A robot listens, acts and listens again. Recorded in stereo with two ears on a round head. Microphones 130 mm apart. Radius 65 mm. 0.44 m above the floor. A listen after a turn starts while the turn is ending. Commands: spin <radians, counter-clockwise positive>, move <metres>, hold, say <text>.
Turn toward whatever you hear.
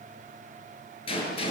spin 0.70
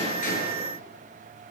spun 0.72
hold
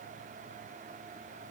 say I heard a gunshot, but can't make it out now. It was about straight ahead or 100° left.